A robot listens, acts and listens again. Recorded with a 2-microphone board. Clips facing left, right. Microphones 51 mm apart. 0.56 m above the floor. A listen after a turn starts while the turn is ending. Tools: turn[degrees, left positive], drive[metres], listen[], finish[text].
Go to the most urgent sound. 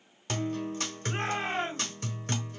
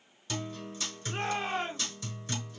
Thought: The shout: about 75° left or 105° left.
Action: turn[75]
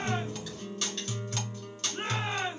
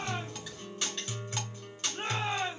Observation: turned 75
Thought: So it is at 25° left.
Action: turn[25]
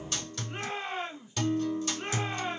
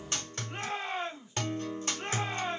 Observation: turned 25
Action: drive[1.0]
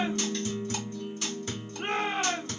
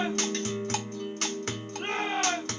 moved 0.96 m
Action: drive[1.0]
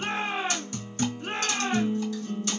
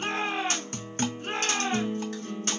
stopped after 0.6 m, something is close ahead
Action: finish[I am next to the shout.]